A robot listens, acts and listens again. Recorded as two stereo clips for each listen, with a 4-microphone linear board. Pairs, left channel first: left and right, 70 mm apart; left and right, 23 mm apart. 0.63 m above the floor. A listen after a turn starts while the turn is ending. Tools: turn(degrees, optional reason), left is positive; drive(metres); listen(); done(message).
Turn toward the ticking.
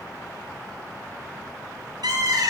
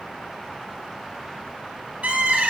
listen()
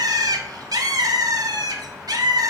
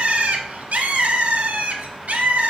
listen()
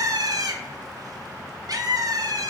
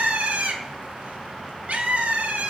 done("I can't make out ticking to turn to.")